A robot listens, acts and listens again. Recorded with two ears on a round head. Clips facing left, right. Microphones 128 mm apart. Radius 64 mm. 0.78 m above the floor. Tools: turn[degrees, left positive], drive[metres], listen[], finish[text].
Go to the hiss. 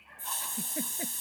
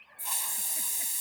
Action: turn[-30]
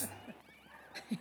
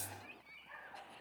Thought: So it is at 15° left.
Action: turn[15]
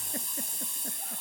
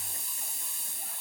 Action: drive[1.0]
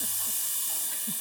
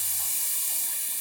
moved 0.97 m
Thought: The hiss is now 10° right.
Action: turn[-10]
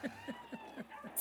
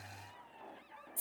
Action: drive[1.0]
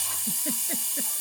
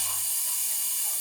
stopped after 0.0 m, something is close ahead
Action: finish[Arrived at the hiss, straight ahead.]